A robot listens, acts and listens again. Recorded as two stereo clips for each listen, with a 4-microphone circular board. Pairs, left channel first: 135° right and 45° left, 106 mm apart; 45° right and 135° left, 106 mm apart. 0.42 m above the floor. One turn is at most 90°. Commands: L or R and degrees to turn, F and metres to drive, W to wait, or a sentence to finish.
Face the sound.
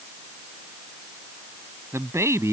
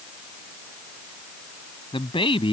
R15
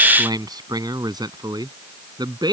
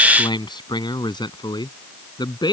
Facing the man speaking.